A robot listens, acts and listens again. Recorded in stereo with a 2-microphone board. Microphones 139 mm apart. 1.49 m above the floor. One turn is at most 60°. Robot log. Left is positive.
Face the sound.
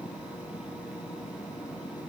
cmd idle
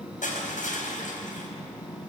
note: The crushing: about 75° left or 105° left.
cmd yaw +60
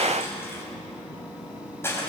note: So it is at 20° left.
cmd yaw +20
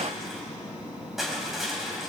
end: Found it: crushing, straight ahead, over 4 m away.